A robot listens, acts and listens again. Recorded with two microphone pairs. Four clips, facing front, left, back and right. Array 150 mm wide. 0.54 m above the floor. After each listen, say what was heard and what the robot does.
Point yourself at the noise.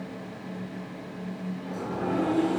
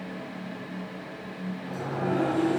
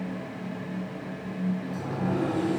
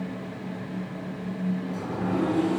The sliding door: 70° left. Turn 70° left.
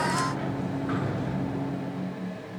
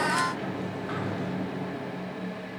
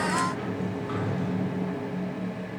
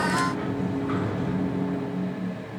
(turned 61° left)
Facing the sliding door, 2 to 4 m away.